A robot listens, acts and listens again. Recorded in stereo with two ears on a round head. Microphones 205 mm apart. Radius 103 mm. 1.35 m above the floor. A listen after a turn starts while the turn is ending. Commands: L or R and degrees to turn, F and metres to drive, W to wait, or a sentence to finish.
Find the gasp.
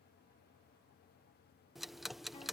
W
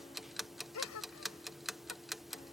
L90
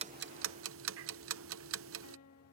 I heard a gasp from this way, but can't make it out now.